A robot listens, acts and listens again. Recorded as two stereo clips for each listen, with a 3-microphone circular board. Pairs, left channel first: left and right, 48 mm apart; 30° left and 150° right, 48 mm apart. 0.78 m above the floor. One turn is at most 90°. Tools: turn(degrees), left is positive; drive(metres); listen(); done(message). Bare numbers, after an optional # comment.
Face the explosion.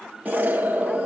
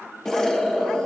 # The explosion: 45° right.
turn(-45)
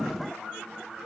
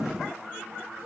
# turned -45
done("I heard an explosion from this way, but can't make it out now.")